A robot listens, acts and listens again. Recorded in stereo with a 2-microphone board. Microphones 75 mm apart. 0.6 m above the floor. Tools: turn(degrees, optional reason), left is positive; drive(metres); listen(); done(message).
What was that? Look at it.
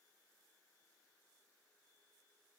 listen()
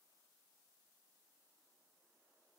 listen()
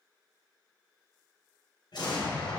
turn(degrees=90)
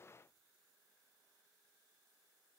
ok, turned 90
done("Facing where the explosion came from. I can't hear it now.")